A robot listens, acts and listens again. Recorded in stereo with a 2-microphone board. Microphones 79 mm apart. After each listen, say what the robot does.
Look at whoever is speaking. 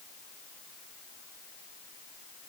Keep listening.
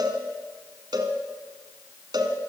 Keep listening.
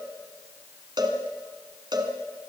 I can't make out anyone speaking, only a cowbell.